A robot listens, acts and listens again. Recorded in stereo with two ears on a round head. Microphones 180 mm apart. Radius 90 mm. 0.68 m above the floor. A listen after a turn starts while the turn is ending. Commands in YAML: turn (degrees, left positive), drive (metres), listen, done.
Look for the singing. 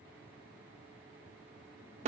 listen: true
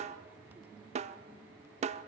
listen: true
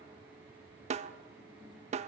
done: "I can't make out singing to turn to."